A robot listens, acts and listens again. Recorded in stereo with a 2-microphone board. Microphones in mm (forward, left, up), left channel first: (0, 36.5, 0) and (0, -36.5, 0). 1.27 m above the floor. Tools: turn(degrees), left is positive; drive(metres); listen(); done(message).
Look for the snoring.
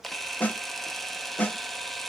listen()
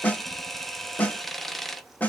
listen()
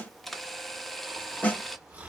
turn(degrees=-20)
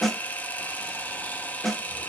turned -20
listen()
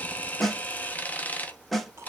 listen()
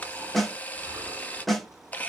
turn(degrees=-140)
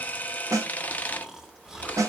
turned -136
done("Found it: snoring, straight ahead.")